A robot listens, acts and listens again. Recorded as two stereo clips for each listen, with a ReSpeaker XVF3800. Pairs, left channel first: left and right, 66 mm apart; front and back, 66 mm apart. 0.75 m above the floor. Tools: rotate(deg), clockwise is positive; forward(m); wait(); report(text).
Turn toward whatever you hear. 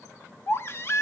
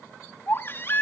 rotate(-50)
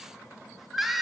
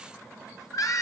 report("Facing the baby crying, under 1 m away.")